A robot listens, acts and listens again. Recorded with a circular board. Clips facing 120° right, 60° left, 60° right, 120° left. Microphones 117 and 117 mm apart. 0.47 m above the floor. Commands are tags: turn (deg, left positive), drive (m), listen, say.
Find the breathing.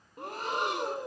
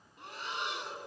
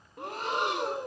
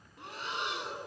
<turn deg="-85"/>
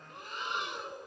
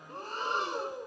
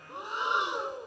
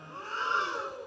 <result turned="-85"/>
<turn deg="10"/>
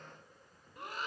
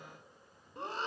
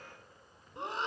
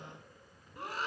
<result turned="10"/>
<say>Found it: breathing, straight ahead.</say>